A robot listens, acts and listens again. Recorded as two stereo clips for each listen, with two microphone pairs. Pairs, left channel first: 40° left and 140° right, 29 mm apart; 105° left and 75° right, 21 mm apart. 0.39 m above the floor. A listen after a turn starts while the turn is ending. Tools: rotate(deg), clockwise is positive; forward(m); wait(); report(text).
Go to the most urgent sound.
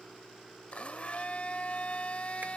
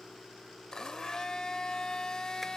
wait()
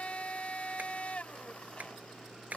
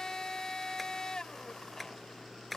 wait()
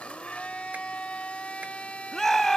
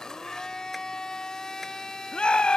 rotate(-120)
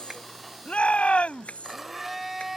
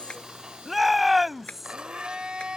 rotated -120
rotate(-10)
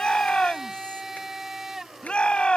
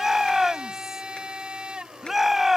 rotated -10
forward(1.0)
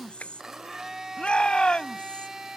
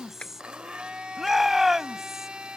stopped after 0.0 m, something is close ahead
report("Something is in my way. I am facing the shout but have not reached it.")